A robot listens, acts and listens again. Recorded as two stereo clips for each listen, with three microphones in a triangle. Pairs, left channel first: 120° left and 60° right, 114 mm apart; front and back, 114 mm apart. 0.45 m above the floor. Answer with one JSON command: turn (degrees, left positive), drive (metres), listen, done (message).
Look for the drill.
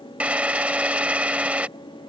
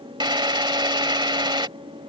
{"turn": -135}
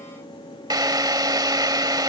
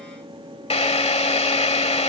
{"turn": -10}
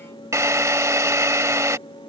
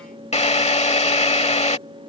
{"done": "Found it: a drill, straight ahead."}